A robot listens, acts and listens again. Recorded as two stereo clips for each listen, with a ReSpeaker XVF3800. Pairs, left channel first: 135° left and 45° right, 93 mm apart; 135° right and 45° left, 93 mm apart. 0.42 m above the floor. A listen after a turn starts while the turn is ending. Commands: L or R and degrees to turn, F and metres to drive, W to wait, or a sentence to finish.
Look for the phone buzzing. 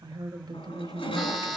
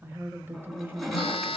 R135
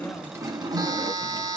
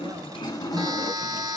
Found it: a phone buzzing, straight ahead.